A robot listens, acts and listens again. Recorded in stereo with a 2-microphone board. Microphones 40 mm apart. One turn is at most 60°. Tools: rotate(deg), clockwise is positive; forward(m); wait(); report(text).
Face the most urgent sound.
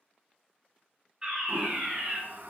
rotate(20)
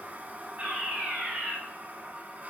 rotate(60)
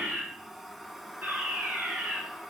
rotate(60)
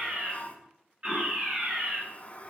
rotate(40)
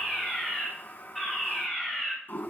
report("Facing the fire alarm.")